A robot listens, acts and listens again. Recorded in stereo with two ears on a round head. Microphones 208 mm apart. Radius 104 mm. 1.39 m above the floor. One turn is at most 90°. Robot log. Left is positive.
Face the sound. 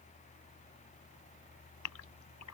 note: The gasp: about 75° left or 105° left.
cmd yaw +75
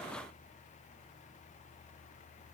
cmd idle
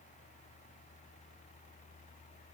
end: I heard a gasp, but can't make it out now. It was about straight ahead or 30° left.